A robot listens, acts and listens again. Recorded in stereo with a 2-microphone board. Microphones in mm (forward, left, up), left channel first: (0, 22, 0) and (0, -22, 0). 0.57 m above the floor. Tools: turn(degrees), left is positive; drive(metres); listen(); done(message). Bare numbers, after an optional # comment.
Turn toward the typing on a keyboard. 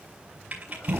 # The typing on a keyboard: about 35° right or 145° right.
turn(-35)
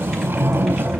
listen()
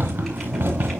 listen()
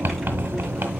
done("I heard typing on a keyboard, but can't make it out now. It was about straight ahead or 110° right.")